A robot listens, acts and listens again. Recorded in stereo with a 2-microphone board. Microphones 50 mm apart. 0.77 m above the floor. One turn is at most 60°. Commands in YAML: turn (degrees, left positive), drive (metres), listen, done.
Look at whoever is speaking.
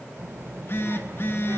turn: -55
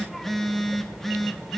done: "Found it: a child speaking, straight ahead."